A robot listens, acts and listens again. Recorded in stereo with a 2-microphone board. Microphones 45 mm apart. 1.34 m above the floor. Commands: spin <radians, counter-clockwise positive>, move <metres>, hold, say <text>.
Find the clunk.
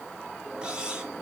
hold
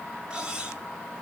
hold
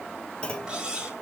spin 0.35
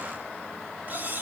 hold
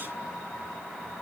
say I heard a clunk, but can't make it out now. It was about straight ahead or 140° left.